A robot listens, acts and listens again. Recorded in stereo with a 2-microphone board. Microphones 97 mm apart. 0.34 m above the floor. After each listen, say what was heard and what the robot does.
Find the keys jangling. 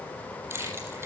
The keys jangling: about 30° right or 150° right. Turn 30° right.
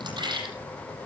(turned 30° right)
So it is at 120° right. Turn 120° right.
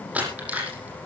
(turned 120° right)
The keys jangling is now 15° right. Turn 15° right.
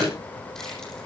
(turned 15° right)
Facing the keys jangling, over 4 m away.